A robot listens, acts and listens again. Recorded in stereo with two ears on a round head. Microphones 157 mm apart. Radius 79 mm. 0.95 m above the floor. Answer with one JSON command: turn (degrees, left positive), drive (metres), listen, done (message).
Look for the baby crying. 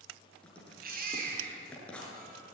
{"turn": -55}
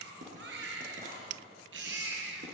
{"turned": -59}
{"turn": -65}
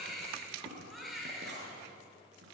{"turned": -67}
{"done": "Found it: a baby crying, straight ahead, over 4 m away."}